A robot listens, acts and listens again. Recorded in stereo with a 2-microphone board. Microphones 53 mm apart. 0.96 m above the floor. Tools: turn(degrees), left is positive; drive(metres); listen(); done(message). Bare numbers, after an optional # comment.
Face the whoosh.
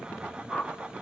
turn(30)
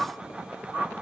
# So it is at 25° right.
turn(-25)
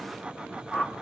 done("Facing the whoosh, 1 to 2 m away.")